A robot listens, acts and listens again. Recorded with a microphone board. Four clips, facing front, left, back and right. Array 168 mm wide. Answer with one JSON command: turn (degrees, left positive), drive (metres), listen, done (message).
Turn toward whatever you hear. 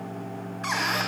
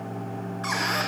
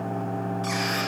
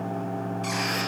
{"turn": 45}
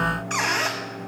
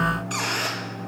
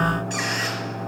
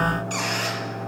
{"turn": 15}
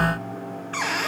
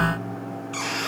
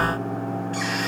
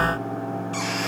{"done": "Found it: a squeak, straight ahead, 1 to 2 m away."}